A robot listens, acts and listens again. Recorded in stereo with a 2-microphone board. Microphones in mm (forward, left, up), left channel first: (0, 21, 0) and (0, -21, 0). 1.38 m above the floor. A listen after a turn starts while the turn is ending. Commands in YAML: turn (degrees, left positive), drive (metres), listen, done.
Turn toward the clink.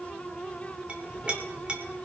turn: -25
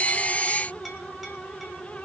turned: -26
listen: true
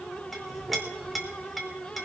done: "Found it: a clink, straight ahead, 2 to 4 m away."